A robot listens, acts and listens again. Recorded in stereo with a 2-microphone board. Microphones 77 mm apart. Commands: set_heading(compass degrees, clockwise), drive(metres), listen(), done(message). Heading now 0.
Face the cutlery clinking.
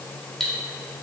set_heading(330)
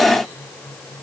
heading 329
listen()
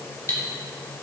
set_heading(184)
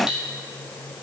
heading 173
set_heading(183)
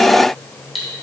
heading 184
done("Facing the cutlery clinking, 1 to 2 m away.")